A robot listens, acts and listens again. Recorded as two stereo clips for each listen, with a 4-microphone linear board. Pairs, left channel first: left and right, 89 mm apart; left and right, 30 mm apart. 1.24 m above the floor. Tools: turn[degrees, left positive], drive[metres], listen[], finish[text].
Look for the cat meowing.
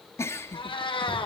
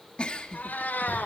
Action: turn[90]
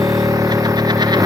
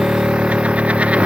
Action: listen[]
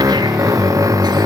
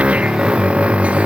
Action: listen[]
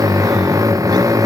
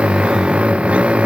Action: finish[Facing where the cat meowing came from. I can't hear it now.]